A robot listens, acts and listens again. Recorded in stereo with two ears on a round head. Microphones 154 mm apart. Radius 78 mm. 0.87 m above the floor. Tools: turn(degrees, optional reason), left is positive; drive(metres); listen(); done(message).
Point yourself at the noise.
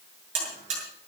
turn(degrees=-40, reason="The buzzer: about 40° right or 140° right.")
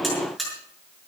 done("Found it: a buzzer, straight ahead, over 4 m away.")